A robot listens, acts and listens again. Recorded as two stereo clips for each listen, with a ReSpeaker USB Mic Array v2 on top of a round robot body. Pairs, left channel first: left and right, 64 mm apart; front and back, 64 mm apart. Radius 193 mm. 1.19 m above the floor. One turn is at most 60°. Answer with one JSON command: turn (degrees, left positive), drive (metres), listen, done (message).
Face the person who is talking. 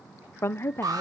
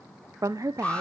{"turn": 60}
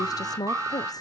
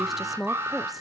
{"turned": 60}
{"turn": 60}
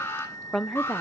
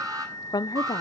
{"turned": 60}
{"done": "Facing the woman speaking, under 1 m away."}